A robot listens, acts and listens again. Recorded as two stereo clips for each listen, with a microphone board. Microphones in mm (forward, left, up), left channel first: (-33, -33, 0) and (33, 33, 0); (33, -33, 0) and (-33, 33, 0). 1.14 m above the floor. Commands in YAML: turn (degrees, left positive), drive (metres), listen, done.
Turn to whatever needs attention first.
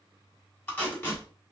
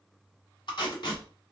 listen: true
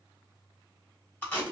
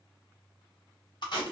listen: true
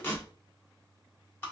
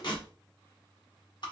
done: "I can't make out anything urgent to turn to."